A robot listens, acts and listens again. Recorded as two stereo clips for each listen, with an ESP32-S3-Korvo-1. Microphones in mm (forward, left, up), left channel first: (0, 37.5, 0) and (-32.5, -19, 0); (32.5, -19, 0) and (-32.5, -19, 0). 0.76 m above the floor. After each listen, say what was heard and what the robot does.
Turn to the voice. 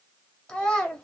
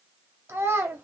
The child speaking: 135° left. Turn 135° left.
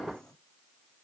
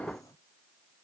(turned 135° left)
Keep listening.
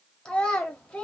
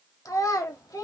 The child speaking is now 15° right. Turn 15° right.
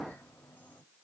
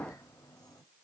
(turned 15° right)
Keep listening.
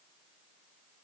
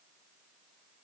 Keep listening.
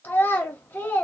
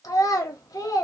Found it: a child speaking, straight ahead, 1 to 2 m away.